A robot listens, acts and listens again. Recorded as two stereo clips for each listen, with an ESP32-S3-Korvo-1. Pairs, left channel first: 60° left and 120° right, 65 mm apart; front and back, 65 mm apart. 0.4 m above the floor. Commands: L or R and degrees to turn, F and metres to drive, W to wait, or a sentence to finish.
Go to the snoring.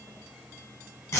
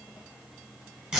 W
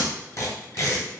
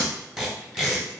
W
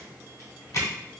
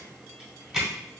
I can't make out snoring to turn to.